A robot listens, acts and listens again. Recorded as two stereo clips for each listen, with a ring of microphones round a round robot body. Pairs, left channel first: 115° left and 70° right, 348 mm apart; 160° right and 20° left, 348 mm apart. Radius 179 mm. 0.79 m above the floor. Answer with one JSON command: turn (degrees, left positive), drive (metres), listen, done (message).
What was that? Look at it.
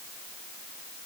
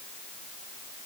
{"listen": true}
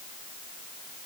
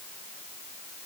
{"listen": true}
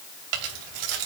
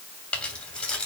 {"turn": -70}
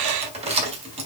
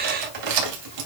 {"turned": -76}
{"done": "Facing the keys jangling."}